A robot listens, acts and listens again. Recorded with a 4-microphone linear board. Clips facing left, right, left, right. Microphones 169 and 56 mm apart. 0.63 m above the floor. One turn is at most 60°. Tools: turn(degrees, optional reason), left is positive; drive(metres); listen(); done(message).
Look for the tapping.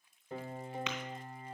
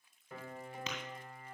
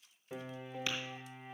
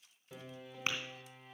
turn(degrees=-40, reason="The tapping: about 40° right or 140° right.")
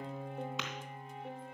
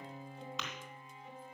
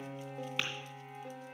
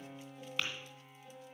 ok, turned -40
done("Found it: tapping, straight ahead.")